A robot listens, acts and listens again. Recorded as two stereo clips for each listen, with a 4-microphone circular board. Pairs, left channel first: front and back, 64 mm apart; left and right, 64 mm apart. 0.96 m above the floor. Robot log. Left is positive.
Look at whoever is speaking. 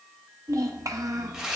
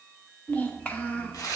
note: The child speaking: 155° left.
cmd yaw +155
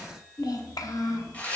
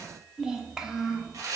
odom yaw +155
note: The child speaking is now 10° right.
cmd yaw -10
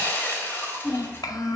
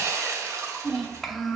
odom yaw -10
end: Found it: a child speaking, straight ahead.